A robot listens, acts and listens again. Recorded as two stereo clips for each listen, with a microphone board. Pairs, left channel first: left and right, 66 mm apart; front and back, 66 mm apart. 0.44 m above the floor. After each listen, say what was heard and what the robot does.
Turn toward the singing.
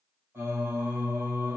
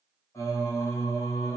The singing: 40° right. Turn 40° right.
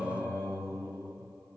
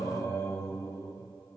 The singing is now 20° right. Turn 20° right.
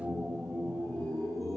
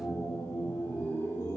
Facing the singing, 1 to 2 m away.